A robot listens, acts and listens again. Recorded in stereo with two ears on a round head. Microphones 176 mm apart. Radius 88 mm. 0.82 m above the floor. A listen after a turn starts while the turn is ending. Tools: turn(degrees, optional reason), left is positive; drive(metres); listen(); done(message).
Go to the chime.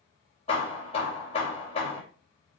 listen()
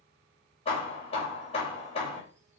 listen()
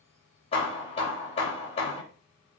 done("I can't make out a chime, only hammering.")